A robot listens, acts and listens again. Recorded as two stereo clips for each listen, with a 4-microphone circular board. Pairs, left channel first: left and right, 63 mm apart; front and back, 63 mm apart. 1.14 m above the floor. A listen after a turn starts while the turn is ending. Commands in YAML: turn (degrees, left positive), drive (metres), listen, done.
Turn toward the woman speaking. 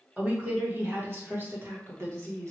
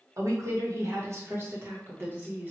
turn: -120
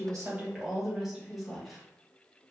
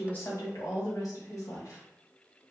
done: "Facing the woman speaking, 1 to 2 m away."